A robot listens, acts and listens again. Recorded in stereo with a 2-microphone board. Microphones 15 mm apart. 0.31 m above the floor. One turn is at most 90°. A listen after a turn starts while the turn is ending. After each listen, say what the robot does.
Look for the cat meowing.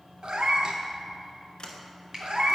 Turn 70° right.
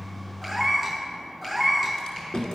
Found it: a cat meowing, straight ahead.